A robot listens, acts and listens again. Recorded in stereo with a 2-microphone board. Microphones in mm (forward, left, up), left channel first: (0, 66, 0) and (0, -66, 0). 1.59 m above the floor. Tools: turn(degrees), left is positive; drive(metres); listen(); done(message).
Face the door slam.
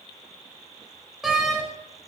turn(degrees=30)
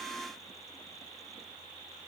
listen()
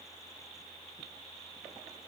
done("I heard a door slam, but can't make it out now. It was about 30° right or 150° left.")